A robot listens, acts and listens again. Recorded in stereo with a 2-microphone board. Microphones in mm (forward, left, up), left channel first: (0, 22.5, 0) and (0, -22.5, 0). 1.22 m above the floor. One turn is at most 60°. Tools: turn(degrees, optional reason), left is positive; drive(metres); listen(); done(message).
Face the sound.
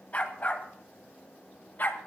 turn(degrees=50, reason="The dog barking: about 50° left or 130° left.")
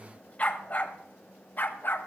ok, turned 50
turn(degrees=55, reason="So it is at 55° left.")
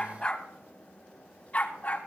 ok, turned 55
turn(degrees=35, reason="The dog barking is now 35° left.")
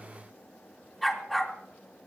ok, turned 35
done("Found it: a dog barking, straight ahead, 2 to 4 m away.")